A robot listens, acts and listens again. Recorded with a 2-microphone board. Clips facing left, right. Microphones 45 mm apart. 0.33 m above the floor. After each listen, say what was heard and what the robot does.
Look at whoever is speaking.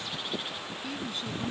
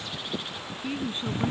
The woman speaking: about 25° right or 155° right. Turn 25° right.
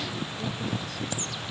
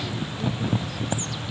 Keep listening.
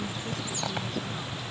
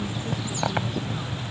Keep listening.
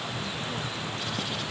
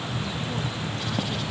I heard a woman speaking, but can't make it out now. It was about straight ahead or 130° right.